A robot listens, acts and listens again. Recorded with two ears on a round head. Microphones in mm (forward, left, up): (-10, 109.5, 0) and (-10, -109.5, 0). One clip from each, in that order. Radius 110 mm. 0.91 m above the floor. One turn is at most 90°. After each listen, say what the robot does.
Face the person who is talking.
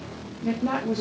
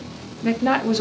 Turn 55° right.
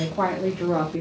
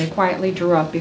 Turn 75° right.
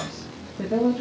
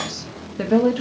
Turn 70° right.
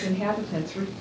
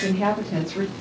Turn 10° right.
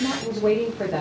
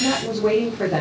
Facing the woman speaking, 2 to 4 m away.